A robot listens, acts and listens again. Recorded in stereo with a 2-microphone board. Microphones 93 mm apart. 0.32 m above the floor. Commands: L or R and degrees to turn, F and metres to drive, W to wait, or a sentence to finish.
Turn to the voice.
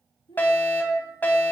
L75
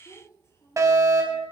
L35
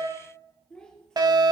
L10
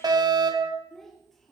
Found it: a child speaking, straight ahead, 2 to 4 m away.